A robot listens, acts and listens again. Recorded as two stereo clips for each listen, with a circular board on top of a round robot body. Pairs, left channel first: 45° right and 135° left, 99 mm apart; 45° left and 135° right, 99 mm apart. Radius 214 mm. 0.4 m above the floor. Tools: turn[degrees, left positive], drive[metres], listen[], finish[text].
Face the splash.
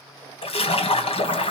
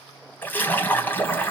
Thought: The splash: 30° right.
Action: turn[-30]
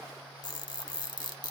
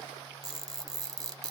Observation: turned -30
Action: finish[Facing where the splash came from. I can't hear it now.]